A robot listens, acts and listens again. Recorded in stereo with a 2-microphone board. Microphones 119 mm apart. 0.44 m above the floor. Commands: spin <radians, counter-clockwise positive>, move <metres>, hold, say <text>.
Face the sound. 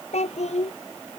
spin 1.13
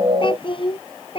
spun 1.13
spin 0.79
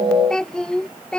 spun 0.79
say Facing the child speaking.